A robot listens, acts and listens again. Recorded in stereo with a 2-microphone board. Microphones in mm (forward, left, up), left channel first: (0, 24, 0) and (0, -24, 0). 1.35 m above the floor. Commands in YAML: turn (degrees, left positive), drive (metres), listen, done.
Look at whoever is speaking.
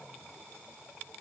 listen: true
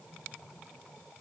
listen: true
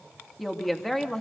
turn: 30
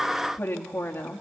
turn: 120
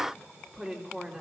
turn: -20
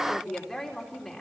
done: "Found it: a woman speaking, straight ahead."